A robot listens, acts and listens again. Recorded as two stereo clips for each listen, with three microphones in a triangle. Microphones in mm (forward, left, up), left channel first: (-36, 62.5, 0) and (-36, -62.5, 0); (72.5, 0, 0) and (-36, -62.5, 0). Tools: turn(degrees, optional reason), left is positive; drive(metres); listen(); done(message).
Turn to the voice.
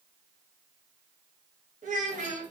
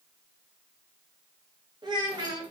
turn(degrees=-95, reason="The child speaking: 95° right.")
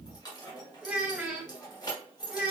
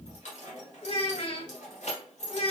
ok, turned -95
turn(degrees=-10, reason="The child speaking is now 10° right.")
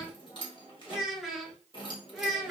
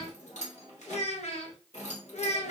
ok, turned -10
done("Facing the child speaking, under 1 m away.")